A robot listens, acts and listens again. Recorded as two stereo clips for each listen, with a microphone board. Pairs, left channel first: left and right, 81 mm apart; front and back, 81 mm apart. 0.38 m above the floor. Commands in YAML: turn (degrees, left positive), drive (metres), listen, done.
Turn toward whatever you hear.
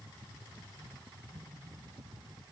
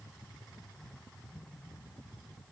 listen: true
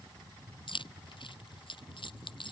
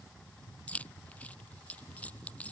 turn: 75
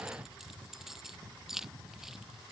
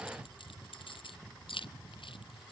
done: "Facing the keys jangling."